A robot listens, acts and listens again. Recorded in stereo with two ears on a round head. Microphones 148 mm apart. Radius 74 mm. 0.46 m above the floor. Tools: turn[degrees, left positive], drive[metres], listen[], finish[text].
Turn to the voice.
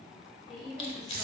Action: turn[30]
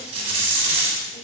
Action: listen[]
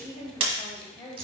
Thought: So it is at 150° left.
Action: turn[150]
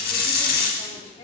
Action: listen[]
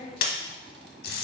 Thought: The woman speaking is now 35° left.
Action: turn[35]
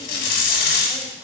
Action: listen[]
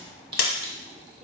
Action: listen[]
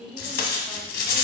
Action: finish[Found it: a woman speaking, straight ahead, 1 to 2 m away.]